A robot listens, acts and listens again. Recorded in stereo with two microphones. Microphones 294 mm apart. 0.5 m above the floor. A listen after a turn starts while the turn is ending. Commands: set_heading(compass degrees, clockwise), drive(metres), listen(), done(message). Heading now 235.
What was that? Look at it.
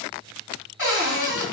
set_heading(145)
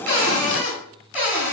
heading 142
done("Found it: a cupboard door, straight ahead, 1 to 2 m away.")